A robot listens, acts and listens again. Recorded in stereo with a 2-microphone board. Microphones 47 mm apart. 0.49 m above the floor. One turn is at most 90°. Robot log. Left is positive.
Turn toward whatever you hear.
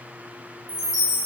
note: The chime: about 25° right or 155° right.
cmd yaw -25
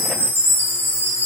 note: So it is at 130° right.
cmd yaw -90
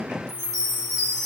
note: The chime is now 25° right.
cmd yaw -25
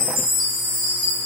note: The chime is now 10° right.
cmd yaw -10
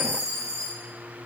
end: Found it: a chime, straight ahead.